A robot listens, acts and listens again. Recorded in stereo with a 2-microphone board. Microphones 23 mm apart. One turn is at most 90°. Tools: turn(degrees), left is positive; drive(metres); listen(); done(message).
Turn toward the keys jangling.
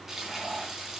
listen()
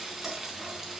listen()
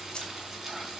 turn(degrees=40)
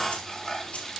listen()
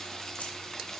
listen()
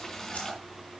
done("I heard keys jangling, but can't make it out now. It was about straight ahead or 100° left.")